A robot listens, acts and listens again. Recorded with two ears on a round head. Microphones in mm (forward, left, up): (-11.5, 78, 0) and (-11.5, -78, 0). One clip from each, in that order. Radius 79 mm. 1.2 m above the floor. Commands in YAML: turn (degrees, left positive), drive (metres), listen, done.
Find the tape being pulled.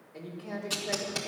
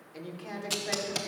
turn: -15
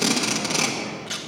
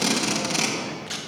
done: "Found it: tape being pulled, straight ahead, 1 to 2 m away."